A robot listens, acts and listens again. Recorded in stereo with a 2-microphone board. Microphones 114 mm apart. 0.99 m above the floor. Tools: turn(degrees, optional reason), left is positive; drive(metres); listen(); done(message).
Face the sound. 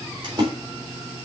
turn(degrees=-45, reason="The splash: about 45° right or 135° right.")
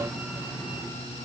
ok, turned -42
listen()
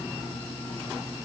done("I heard a splash, but can't make it out now. It was about straight ahead or 95° right.")